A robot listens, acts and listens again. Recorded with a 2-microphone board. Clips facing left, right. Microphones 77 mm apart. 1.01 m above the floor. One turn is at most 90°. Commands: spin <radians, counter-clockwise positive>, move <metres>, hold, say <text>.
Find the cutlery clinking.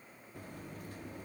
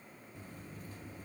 hold
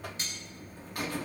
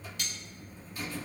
spin 0.61
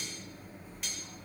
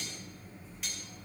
hold
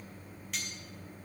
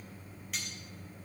say Found it: cutlery clinking, straight ahead.